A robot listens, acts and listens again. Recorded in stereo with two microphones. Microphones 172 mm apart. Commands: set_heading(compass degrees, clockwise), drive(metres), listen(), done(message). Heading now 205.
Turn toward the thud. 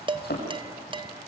set_heading(115)
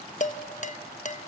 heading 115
done("I heard a thud from this way, but can't make it out now.")